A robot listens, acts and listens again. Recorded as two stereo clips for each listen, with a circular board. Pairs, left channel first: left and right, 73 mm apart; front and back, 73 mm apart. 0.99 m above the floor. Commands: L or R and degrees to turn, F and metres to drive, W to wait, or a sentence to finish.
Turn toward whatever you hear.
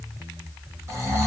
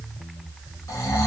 R40
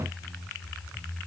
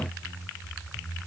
W
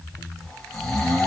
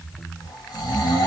Facing the snoring, 1 to 2 m away.